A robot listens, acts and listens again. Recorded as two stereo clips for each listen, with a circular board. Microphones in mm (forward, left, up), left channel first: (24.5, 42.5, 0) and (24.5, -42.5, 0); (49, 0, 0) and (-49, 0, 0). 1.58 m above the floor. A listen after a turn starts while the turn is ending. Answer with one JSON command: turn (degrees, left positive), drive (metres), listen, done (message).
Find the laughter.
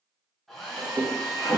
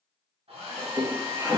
{"turn": -130}
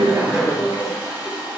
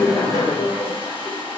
{"turn": 20}
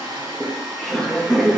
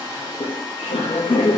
{"done": "Found it: laughter, straight ahead, under 1 m away."}